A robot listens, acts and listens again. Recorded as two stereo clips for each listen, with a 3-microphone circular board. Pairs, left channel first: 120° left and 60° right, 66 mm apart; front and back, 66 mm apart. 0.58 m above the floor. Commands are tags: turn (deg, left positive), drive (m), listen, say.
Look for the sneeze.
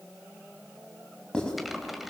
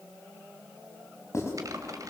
<listen/>
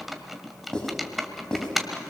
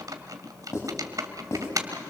<listen/>
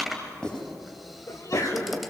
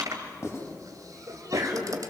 <turn deg="150"/>
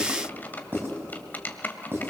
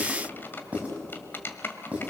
<say>Facing where the sneeze came from. I can't hear it now.</say>